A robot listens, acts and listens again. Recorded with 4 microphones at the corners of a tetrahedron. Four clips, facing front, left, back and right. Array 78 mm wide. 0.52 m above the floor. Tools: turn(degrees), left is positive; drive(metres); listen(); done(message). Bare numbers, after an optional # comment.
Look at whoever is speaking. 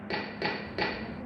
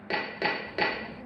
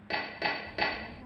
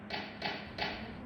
# The child speaking: 25° left.
turn(25)
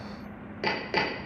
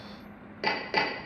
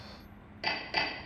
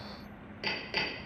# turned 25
# The child speaking is now 15° right.
turn(-15)
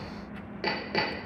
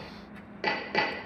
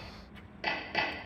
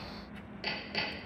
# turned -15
done("Found it: a child speaking, straight ahead, 2 to 4 m away.")